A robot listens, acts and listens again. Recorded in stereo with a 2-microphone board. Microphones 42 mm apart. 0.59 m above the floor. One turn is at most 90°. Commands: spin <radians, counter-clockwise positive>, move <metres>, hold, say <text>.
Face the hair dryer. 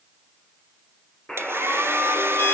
spin -1.31
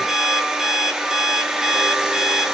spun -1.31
spin -0.26
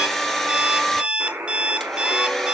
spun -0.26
say Facing the hair dryer.